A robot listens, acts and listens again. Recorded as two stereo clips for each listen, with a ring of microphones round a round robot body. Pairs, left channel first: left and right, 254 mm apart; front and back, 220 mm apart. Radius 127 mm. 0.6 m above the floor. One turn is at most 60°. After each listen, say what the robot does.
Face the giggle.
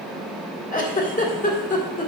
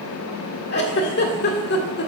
Turn 35° left.
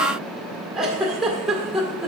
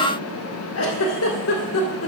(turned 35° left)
Facing the giggle.